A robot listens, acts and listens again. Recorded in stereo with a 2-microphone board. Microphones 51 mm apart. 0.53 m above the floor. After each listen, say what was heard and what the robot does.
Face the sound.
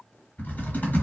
The typing on a keyboard: about 40° left or 140° left. Turn 40° left.
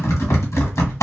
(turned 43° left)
So it is at 95° left. Turn 95° left.
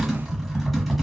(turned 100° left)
Facing the typing on a keyboard, 1 to 2 m away.